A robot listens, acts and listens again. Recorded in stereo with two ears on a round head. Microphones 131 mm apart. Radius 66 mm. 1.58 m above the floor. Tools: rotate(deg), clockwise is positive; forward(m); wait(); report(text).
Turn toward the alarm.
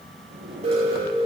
rotate(45)
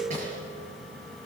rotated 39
wait()
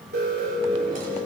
rotate(100)
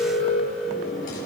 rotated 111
rotate(-15)
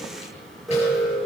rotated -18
report("Facing the alarm, over 4 m away.")